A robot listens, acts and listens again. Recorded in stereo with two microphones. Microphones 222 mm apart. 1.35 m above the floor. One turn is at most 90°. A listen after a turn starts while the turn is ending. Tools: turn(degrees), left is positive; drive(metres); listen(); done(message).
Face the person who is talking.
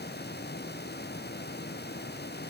listen()
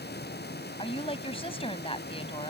turn(degrees=25)
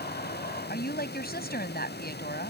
turn(degrees=90)
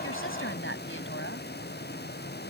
turn(degrees=40)
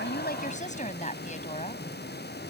turn(degrees=35)
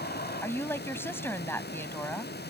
turn(degrees=10)
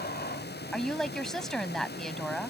done("Found it: a woman speaking, straight ahead.")